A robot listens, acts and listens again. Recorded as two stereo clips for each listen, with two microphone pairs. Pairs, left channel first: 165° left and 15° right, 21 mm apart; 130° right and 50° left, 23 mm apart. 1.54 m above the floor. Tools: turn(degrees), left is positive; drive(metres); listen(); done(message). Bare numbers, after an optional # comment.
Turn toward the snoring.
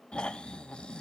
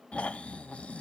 # The snoring: 160° right.
turn(-160)
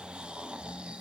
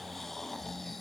# The snoring is now 50° right.
turn(-50)
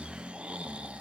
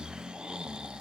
done("Facing the snoring.")